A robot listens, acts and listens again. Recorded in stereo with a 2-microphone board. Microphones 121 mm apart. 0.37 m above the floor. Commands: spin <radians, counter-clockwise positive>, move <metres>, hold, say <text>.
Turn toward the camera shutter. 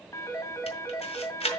spin 0.96
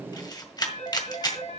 spin 0.79
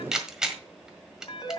say Facing the camera shutter, 1 to 2 m away.